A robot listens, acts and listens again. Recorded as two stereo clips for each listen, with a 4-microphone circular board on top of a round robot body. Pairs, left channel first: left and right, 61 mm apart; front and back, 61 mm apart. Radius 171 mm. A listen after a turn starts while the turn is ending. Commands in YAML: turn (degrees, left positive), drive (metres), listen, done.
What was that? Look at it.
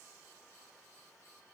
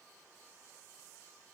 listen: true
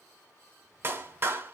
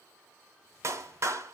turn: -145
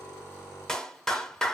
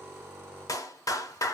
turn: 10
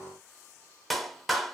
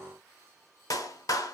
done: "Facing the clap."